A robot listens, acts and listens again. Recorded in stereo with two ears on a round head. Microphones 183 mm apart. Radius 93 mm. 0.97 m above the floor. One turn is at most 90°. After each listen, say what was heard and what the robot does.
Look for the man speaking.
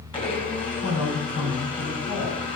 The man speaking: about 65° left or 115° left. Turn 65° left.
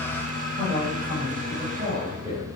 So it is at 15° right. Turn 15° right.
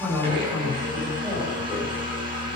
Facing the man speaking.